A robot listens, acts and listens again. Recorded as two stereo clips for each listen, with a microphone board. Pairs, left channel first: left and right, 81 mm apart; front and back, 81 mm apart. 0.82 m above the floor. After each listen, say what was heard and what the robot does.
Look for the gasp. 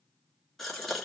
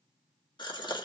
Found it: a gasp, straight ahead.